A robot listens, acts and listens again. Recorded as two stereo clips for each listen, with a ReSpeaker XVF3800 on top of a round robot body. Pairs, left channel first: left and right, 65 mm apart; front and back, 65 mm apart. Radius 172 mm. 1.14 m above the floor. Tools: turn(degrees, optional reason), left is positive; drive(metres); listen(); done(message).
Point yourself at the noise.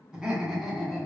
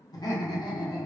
done("Facing the laughter.")